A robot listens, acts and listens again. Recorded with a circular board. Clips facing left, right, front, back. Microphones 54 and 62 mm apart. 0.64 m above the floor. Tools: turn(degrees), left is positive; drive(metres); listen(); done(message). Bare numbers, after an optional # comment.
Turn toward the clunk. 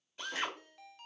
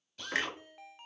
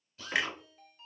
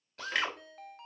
# The clunk: 80° right.
turn(-80)
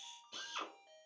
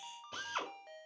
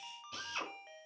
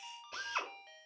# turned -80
done("I heard a clunk from this way, but can't make it out now.")